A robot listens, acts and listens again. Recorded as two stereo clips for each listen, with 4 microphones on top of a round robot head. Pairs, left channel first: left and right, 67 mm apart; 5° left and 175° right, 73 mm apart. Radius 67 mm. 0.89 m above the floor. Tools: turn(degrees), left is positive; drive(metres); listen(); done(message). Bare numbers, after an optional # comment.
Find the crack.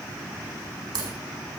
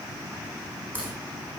# The crack: 105° right.
turn(-105)
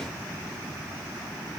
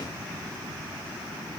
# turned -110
done("I heard a crack from this way, but can't make it out now.")